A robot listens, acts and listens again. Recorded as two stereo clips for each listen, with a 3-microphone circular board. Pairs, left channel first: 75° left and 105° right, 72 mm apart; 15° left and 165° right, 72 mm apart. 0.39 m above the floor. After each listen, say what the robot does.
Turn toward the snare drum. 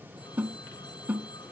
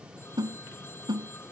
Turn 175° right.
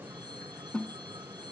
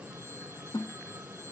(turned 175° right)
Found it: a snare drum, straight ahead.